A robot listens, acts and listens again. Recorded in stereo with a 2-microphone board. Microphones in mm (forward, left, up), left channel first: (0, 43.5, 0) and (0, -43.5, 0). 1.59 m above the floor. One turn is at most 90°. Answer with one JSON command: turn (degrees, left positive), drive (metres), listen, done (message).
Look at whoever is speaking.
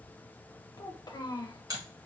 {"turn": 50}
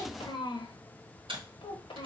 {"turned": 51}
{"turn": 70}
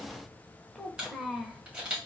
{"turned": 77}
{"done": "Facing the child speaking."}